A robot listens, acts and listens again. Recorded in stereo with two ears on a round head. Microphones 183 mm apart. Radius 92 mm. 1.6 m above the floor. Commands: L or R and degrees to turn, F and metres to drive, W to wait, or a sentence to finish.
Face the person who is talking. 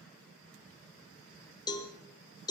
W
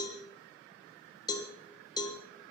W
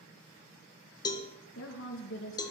L60
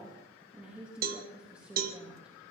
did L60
Found it: a woman speaking, straight ahead.